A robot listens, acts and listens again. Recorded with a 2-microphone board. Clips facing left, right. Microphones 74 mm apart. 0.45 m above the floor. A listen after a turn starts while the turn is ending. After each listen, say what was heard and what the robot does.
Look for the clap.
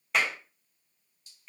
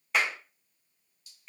Turn 30° right.
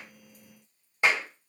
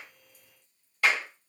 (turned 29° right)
So it is at 25° left. Turn 25° left.
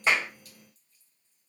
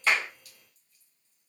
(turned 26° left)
Keep listening.
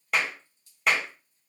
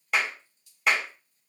Found it: a clap, straight ahead.